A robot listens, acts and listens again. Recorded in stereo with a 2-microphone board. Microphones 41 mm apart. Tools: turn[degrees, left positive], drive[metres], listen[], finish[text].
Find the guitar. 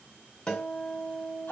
Thought: The guitar: about 45° left or 135° left.
Action: turn[45]
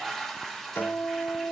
Thought: So it is at 90° left.
Action: turn[90]
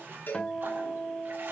Thought: The guitar is now 25° left.
Action: turn[25]
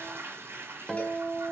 Action: finish[Facing the guitar, 1 to 2 m away.]